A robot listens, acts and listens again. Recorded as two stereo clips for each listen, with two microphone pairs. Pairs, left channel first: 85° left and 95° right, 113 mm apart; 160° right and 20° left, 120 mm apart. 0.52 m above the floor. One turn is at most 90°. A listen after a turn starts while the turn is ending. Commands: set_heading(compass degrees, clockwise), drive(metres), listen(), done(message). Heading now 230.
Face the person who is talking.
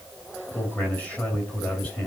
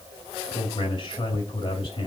set_heading(140)
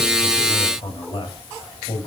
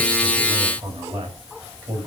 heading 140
set_heading(90)
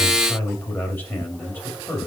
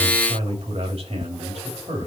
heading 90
set_heading(75)
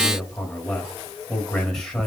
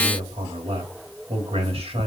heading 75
done("Found it: a man speaking, straight ahead, 2 to 4 m away.")